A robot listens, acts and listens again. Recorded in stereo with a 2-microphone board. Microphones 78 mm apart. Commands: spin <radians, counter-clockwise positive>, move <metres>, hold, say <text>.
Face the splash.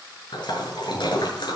spin 1.31
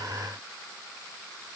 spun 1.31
hold
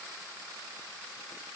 say I heard a splash, but can't make it out now. It was about straight ahead or 30° left.